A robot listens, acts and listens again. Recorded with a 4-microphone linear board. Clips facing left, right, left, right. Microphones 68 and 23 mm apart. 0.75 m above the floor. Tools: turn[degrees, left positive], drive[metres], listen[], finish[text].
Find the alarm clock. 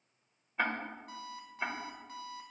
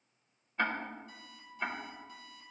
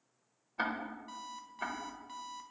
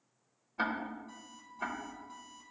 Thought: The alarm clock: about 60° left or 120° left.
Action: turn[60]
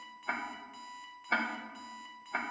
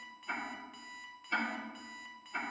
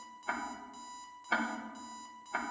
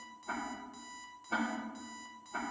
Action: finish[Found it: an alarm clock, straight ahead, 1 to 2 m away.]